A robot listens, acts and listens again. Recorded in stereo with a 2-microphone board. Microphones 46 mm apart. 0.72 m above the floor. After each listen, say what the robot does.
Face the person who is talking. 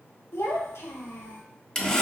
Turn 90° left.
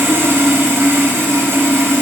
Keep listening.
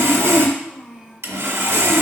Turn 10° right.
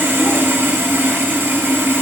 Keep listening.
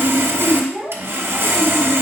Found it: a child speaking, straight ahead.